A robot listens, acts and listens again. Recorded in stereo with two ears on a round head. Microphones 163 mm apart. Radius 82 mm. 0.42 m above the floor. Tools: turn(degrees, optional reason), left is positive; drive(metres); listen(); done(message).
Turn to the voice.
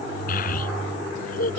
turn(degrees=55, reason="The child speaking: about 55° left or 125° left.")
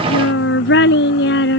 turn(degrees=70, reason="So it is at 70° left.")
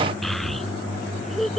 done("Found it: a child speaking, straight ahead.")